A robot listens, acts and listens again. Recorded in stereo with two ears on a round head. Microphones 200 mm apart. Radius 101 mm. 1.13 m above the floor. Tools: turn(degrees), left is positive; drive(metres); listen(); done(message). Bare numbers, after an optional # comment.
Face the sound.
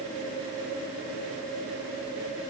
listen()
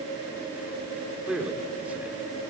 turn(-30)
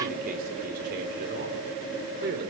# So it is at 125° right.
turn(-125)
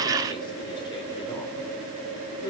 # The man speaking is now 20° left.
turn(20)
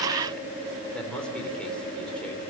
done("Facing the man speaking.")